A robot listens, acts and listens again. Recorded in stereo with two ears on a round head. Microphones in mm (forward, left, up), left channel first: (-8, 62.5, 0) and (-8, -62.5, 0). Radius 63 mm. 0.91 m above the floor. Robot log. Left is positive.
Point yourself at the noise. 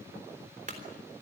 note: The clunk: about 60° right or 120° right.
cmd yaw -60
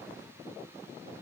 cmd idle
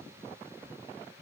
end: I heard a clunk, but can't make it out now. It was about straight ahead or 60° right.